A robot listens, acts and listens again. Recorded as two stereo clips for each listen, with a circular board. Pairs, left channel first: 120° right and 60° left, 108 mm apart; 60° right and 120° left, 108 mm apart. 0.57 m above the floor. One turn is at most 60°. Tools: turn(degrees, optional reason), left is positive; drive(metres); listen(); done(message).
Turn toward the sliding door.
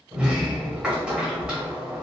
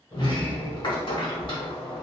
turn(degrees=-20, reason="The sliding door: 20° right.")
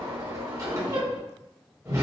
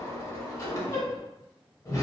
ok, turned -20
done("Facing the sliding door.")